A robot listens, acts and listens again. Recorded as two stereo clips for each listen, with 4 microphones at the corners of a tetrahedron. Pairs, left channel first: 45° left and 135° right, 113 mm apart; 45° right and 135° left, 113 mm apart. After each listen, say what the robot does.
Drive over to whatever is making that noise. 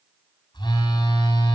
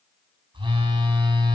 Turn 95° left.
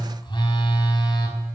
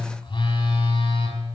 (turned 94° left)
Drive 1.0 m forward.
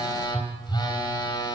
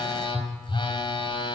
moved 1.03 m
Drive 1.0 m forward.
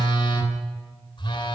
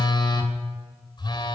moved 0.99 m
Drive 1.0 m forward.
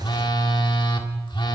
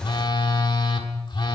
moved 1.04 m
Drive 1.0 m forward.
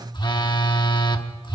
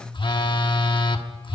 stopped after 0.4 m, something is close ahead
Arrived at the phone buzzing, straight ahead.